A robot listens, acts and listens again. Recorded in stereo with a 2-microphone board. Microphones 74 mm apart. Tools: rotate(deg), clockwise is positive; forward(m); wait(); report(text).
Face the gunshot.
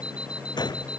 rotate(-70)
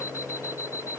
wait()
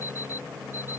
report("I heard a gunshot, but can't make it out now. It was about straight ahead or 40° left.")